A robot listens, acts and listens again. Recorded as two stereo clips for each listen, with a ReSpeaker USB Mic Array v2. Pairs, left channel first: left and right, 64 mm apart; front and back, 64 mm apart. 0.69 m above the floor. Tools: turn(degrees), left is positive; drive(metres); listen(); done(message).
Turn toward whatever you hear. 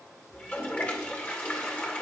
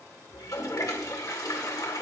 turn(degrees=25)
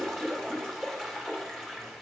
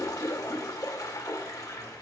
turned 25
done("Found it: a toilet flushing, straight ahead.")